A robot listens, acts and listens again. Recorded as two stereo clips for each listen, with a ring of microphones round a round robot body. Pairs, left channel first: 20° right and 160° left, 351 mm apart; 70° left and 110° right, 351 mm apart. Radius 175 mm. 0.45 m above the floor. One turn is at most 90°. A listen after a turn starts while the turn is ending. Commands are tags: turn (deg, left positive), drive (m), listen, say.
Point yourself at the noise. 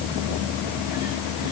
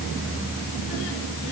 <listen/>
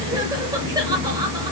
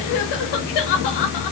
<listen/>
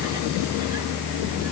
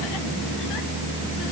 <say>I can't make out anything.</say>